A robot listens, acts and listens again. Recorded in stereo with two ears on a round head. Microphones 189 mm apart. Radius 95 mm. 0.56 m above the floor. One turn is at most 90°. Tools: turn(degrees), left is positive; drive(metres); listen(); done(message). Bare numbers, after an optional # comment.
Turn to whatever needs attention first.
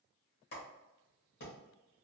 listen()
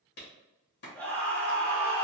turn(30)
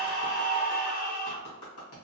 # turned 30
# So it is at 140° left.
turn(90)
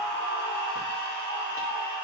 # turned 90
# The scream is now 75° left.
turn(75)
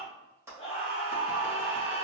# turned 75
# The scream is now 35° left.
turn(35)
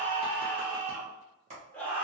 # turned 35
# The scream is now 10° left.
turn(10)
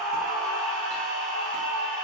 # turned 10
done("Found it: a scream, straight ahead.")